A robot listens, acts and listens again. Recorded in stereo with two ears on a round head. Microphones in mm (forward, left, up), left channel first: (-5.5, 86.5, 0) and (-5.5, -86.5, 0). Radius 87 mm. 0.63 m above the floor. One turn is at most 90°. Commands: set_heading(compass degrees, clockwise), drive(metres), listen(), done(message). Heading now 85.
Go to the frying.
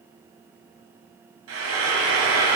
set_heading(175)
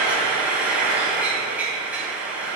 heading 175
drive(1.0)
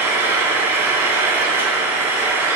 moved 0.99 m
set_heading(185)
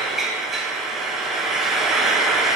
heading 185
drive(1.0)
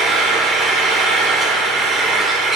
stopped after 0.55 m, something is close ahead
done("I am next to the frying.")